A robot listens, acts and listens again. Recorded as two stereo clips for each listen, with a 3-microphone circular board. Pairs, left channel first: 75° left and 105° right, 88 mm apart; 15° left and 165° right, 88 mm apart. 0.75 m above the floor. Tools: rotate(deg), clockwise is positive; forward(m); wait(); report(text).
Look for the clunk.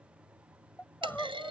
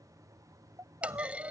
rotate(90)
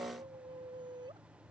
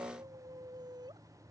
report("I heard a clunk from this way, but can't make it out now.")